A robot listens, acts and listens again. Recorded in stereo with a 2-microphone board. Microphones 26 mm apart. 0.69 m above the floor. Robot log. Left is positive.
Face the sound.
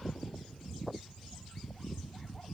cmd idle
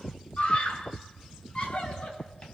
note: The scream: about 40° left or 140° left.
cmd yaw +40
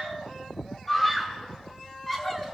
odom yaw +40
end: Facing the scream.